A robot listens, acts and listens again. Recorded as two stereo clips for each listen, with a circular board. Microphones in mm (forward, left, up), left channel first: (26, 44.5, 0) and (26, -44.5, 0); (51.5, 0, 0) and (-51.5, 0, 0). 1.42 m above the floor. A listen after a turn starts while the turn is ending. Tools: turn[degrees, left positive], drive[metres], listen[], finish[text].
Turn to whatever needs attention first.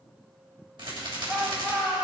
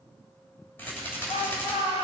Thought: The shout: 25° right.
Action: turn[-25]
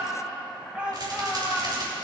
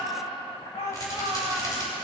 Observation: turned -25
Thought: The shout is now 15° right.
Action: turn[-15]
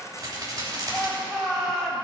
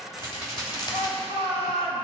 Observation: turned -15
Action: finish[Facing the shout, 2 to 4 m away.]